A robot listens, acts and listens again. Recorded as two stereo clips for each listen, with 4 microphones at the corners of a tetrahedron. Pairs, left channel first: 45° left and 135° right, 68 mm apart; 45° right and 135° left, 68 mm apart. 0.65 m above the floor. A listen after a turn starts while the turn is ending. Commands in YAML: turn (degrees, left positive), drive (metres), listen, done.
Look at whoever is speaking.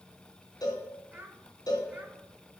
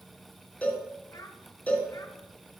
turn: -70
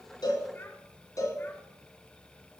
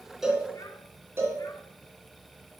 listen: true
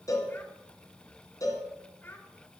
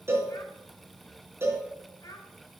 turn: -15
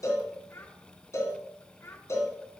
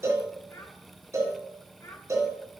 done: "Found it: a child speaking, straight ahead."